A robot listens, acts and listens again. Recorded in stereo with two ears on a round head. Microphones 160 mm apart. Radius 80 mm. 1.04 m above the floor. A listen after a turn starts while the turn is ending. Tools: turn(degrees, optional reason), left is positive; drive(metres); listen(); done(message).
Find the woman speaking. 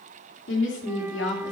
turn(degrees=70, reason="The woman speaking: about 70° left or 110° left.")
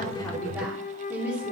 turn(degrees=-15, reason="So it is at 15° right.")
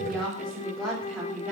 turn(degrees=-10, reason="The woman speaking is now 10° right.")
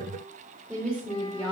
done("Found it: a woman speaking, straight ahead, over 4 m away.")